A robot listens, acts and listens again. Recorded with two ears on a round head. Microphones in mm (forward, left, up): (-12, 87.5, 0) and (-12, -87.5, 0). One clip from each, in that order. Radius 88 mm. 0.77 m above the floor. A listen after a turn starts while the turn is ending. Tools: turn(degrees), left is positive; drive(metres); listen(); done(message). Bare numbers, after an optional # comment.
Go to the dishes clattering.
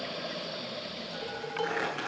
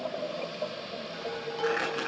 # The dishes clattering: about 25° left or 155° left.
turn(25)
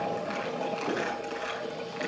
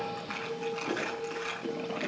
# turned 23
# So it is at 130° left.
turn(130)
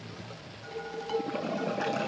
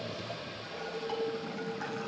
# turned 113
# The dishes clattering is now 20° left.
turn(20)
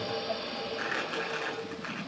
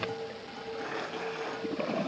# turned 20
listen()
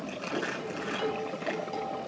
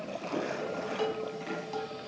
drive(1.0)
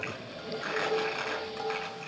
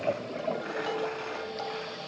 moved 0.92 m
drive(1.0)
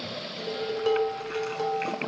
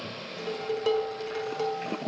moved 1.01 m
drive(1.0)
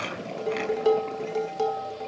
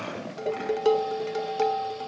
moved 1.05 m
# The dishes clattering is now 15° right.
turn(-15)
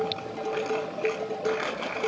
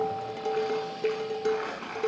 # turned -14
drive(1.0)
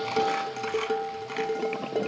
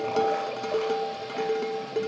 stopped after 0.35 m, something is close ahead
done("Arrived at the dishes clattering, straight ahead.")